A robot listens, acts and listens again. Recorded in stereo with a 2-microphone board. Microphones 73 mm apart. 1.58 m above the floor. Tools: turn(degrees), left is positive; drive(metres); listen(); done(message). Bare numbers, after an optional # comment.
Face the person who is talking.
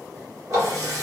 listen()
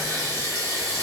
listen()
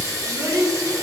# The child speaking: about 60° right or 120° right.
turn(-60)
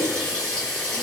listen()
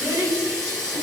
# So it is at 50° right.
turn(-50)
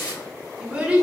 # The child speaking is now 20° right.
turn(-20)
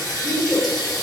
done("Facing the child speaking, under 1 m away.")